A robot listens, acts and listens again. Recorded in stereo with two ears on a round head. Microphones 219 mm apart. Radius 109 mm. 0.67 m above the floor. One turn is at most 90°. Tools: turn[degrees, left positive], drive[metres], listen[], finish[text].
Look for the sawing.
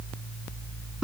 Action: listen[]
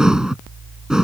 Action: listen[]
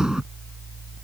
Action: finish[I can't make out sawing to turn to.]